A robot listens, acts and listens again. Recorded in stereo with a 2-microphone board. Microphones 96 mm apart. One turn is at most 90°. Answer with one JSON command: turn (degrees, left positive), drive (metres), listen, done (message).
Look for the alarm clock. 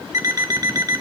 {"turn": -35}
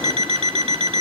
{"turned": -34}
{"turn": -90}
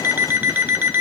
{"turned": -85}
{"turn": -20}
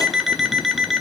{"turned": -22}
{"done": "Found it: an alarm clock, straight ahead, 1 to 2 m away."}